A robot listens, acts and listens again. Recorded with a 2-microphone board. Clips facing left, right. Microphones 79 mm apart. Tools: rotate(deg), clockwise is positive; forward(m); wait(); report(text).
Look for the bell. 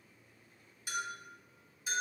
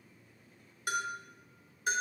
rotate(55)
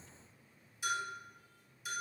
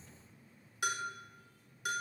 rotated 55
rotate(70)
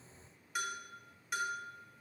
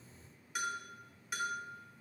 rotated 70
report("Found it: a bell, straight ahead.")